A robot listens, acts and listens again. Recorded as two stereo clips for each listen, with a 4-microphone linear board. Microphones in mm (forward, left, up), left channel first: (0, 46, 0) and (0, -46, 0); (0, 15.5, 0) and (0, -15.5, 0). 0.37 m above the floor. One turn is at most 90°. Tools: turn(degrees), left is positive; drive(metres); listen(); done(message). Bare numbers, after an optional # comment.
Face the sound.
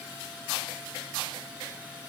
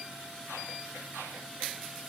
listen()
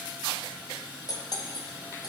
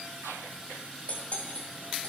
# The cutlery clinking: about 50° left or 130° left.
turn(50)
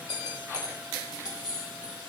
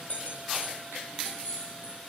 # So it is at 70° left.
turn(70)
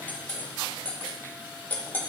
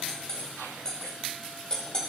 # The cutlery clinking is now 25° left.
turn(25)
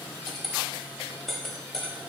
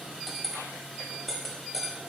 done("Found it: cutlery clinking, straight ahead, 1 to 2 m away.")